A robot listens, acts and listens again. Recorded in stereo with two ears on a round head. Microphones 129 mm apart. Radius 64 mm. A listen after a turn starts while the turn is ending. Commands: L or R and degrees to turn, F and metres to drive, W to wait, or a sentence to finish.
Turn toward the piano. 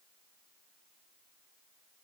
W
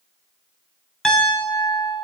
L30
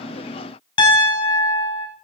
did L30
L145
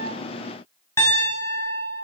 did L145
L20
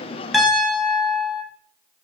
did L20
Found it: a piano, straight ahead.